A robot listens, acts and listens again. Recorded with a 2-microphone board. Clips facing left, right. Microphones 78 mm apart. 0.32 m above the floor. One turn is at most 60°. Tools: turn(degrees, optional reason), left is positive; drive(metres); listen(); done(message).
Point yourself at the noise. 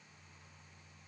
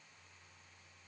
listen()
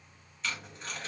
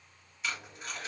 turn(degrees=-30)
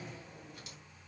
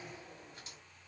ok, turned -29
listen()
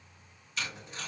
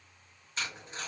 turn(degrees=-60, reason="So it is at 140° right.")
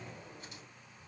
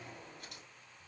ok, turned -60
turn(degrees=-60, reason="Nothing new. It was at 80° right.")
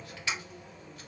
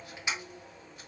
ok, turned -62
turn(degrees=-20, reason="The tape being pulled is now 20° right.")
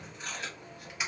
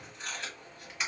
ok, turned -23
done("Found it: tape being pulled, straight ahead, 2 to 4 m away.")